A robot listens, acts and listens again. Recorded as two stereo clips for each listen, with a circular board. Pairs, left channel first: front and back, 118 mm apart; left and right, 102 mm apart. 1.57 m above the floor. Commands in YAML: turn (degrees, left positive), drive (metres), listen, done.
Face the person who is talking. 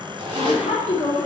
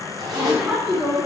turn: -15
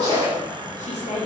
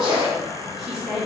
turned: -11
done: "Facing the woman speaking, 2 to 4 m away."